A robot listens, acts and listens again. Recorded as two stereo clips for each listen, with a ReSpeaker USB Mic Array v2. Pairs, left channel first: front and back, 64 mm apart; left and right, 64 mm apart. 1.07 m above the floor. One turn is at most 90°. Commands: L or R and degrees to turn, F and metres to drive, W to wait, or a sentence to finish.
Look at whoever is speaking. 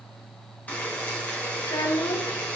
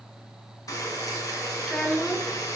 L10
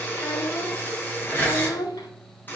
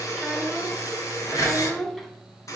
Found it: a child speaking, straight ahead, 1 to 2 m away.